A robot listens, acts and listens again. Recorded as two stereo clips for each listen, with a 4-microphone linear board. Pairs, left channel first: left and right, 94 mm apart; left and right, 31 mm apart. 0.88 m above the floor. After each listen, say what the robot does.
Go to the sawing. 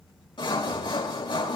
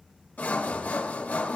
Turn 60° left.
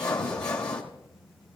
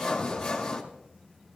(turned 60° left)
Turn 15° left.
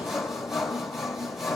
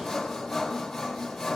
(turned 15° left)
Drive 1.0 m forward.
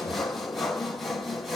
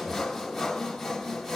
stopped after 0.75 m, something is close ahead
Arrived at the sawing, straight ahead.